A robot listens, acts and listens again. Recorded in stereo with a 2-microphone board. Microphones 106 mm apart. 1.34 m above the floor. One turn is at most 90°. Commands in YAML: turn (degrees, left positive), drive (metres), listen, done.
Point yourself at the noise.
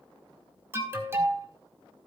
turn: -25
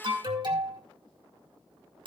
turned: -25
turn: -90
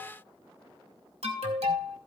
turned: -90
turn: -75
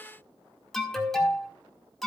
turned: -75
done: "Found it: an alarm, straight ahead."